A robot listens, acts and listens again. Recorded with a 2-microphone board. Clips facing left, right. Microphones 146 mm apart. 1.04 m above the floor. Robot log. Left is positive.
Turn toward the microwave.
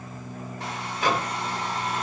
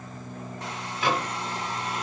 note: The microwave: about 45° left or 135° left.
cmd yaw +45
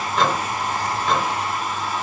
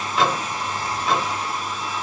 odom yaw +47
end: Facing the microwave, 1 to 2 m away.